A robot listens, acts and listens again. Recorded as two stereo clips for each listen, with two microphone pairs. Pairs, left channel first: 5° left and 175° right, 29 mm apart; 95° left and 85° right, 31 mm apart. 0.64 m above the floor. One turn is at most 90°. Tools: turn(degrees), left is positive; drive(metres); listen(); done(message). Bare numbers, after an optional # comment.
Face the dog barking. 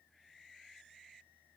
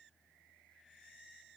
listen()
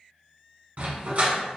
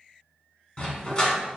# The dog barking: 160° left.
turn(90)
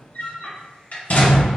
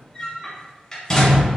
# The dog barking is now 35° left.
turn(35)
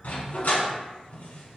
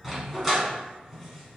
done("Facing the dog barking, 1 to 2 m away.")